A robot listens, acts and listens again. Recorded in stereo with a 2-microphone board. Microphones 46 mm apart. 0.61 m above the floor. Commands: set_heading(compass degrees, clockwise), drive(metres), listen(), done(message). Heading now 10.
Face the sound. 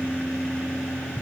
listen()
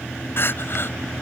set_heading(315)
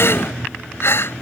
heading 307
set_heading(247)
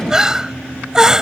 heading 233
set_heading(248)
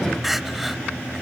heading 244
done("Found it: crying, straight ahead.")